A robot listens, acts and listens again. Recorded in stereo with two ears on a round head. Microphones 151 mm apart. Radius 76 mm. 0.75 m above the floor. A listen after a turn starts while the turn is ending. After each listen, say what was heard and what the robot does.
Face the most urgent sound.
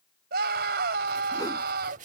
The scream: about 65° right or 115° right. Turn 65° right.
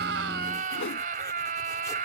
So it is at 50° right. Turn 50° right.
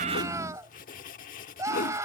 The scream is now 20° right. Turn 20° right.
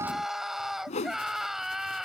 Found it: a scream, straight ahead.